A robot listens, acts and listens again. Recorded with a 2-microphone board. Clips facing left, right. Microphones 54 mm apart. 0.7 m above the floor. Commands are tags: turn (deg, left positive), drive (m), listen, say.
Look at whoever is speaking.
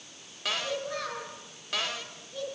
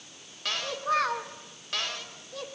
<turn deg="-90"/>
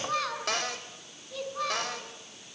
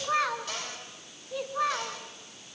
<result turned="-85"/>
<turn deg="-20"/>
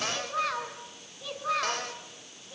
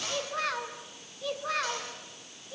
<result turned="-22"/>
<say>Facing the child speaking, 2 to 4 m away.</say>